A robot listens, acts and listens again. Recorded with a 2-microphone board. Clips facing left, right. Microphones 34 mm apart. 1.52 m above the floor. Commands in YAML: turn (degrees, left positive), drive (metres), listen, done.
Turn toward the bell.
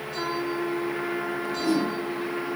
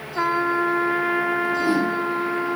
listen: true
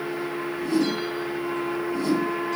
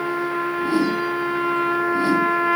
listen: true
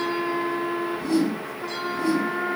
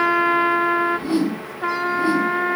done: "I can't make out a bell, only a trumpet and a whoosh."